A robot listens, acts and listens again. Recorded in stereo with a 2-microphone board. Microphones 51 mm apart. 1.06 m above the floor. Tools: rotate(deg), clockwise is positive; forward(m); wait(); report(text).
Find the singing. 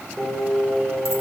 rotate(30)
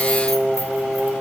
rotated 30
rotate(-15)
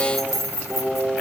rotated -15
report("Facing the singing, over 4 m away.")